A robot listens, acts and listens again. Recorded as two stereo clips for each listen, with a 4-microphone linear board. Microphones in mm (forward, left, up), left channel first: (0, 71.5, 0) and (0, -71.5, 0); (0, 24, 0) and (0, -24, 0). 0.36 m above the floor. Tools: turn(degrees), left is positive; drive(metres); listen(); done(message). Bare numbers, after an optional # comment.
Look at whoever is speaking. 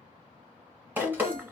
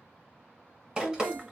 # The woman speaking: about 55° right or 125° right.
turn(-55)
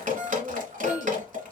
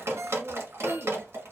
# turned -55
# So it is at 45° right.
turn(-45)
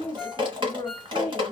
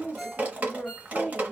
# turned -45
# The woman speaking is now 30° left.
turn(30)
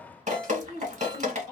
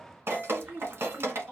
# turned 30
# The woman speaking is now 10° left.
turn(10)
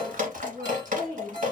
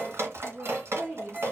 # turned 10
done("Found it: a woman speaking, straight ahead.")